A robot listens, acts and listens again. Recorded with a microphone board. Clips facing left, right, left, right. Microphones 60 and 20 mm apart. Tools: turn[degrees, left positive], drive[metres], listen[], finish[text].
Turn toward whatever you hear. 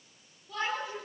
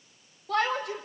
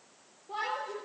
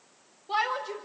Thought: The shout: about 70° right or 110° right.
Action: turn[-70]
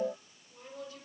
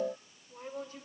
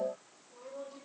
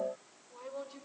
Thought: So it is at 40° right.
Action: turn[-40]
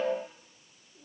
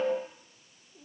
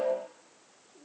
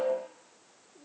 Action: listen[]
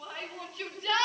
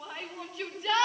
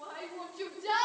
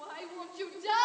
Thought: The shout is now 15° right.
Action: turn[-15]
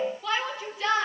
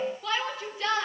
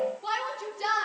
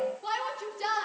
Action: finish[Facing the shout.]